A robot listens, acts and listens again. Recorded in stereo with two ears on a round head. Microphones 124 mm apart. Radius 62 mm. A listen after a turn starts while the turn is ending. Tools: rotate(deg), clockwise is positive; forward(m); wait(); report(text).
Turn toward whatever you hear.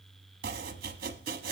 rotate(75)
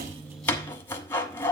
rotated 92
rotate(-15)
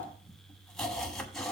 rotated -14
report("Facing the chopping.")